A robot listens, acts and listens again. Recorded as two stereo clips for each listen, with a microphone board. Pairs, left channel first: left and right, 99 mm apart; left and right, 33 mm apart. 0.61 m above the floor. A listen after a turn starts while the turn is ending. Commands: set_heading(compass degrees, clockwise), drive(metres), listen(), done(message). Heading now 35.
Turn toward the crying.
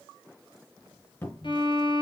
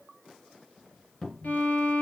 listen()
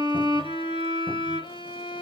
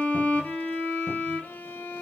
listen()
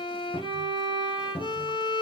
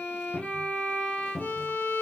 done("I can't make out crying, only a violin and a cupboard door.")